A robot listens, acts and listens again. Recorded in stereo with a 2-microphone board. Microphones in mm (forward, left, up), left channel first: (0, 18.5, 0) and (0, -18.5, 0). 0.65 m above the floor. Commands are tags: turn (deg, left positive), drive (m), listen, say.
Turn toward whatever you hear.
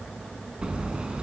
<turn deg="-25"/>
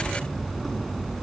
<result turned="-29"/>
<say>Facing the hammering, over 4 m away.</say>